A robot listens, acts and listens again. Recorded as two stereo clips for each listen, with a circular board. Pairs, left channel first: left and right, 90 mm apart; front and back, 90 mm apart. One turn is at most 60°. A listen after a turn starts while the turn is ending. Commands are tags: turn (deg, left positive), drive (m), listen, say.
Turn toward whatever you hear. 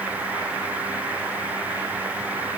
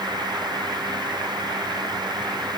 <listen/>
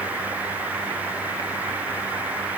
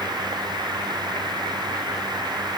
<listen/>
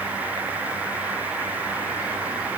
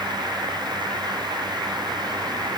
<say>I can't make out anything to turn to.</say>